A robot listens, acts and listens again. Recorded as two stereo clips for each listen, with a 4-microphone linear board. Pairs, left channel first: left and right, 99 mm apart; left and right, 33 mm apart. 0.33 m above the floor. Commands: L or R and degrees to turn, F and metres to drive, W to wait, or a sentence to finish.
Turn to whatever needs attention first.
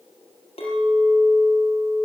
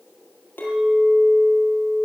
W
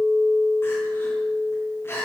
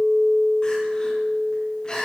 L25
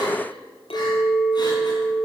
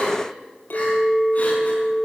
W
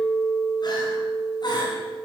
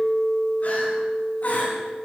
L125
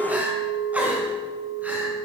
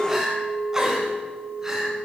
R20
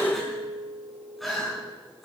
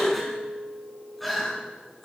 Found it: crying, straight ahead, over 4 m away.